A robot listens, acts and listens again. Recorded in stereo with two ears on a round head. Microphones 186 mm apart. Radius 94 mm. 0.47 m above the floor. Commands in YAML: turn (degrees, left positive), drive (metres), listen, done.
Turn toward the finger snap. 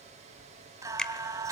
turn: 30
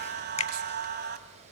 turn: 145
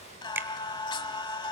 turn: -10
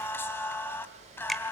done: "Found it: a finger snap, straight ahead."